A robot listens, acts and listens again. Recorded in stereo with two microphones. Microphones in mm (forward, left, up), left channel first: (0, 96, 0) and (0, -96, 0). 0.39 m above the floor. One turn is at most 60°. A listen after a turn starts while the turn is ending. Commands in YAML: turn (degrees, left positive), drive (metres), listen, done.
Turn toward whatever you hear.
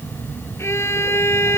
turn: 30
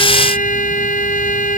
turn: 60
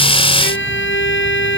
turn: 60
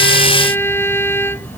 turn: 10
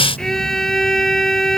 done: "Facing the violin."